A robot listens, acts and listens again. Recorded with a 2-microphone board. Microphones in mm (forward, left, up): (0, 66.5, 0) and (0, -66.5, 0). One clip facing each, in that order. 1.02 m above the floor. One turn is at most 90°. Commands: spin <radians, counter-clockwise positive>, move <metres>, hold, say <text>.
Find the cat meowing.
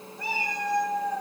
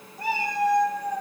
spin -0.96
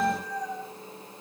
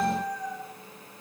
say Found it: a cat meowing, straight ahead.